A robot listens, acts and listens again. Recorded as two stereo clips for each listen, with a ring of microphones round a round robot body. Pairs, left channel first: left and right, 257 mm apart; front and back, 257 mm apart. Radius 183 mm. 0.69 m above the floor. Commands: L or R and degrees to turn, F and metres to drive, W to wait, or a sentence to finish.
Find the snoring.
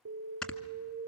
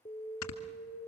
Found it: snoring, straight ahead, 1 to 2 m away.